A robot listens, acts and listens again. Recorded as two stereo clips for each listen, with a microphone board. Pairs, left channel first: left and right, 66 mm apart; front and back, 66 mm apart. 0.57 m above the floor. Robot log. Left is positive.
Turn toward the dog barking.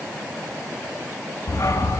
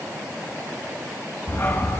note: The dog barking: 55° left.
cmd yaw +55
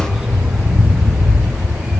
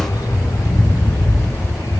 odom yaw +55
note: The dog barking is now 10° right.
cmd yaw -10
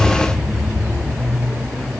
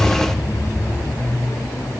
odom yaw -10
end: Facing the dog barking.